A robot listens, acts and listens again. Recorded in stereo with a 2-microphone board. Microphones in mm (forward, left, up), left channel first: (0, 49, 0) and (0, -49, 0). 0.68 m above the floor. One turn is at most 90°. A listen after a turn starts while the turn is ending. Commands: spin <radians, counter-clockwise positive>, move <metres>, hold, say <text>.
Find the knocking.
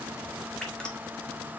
hold
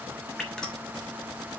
hold
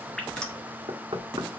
spin -1.05
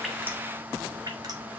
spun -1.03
hold
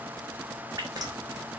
hold
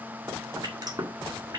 spin -0.96
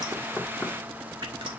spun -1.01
hold
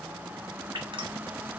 hold
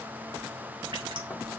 say Facing where the knocking came from. I can't hear it now.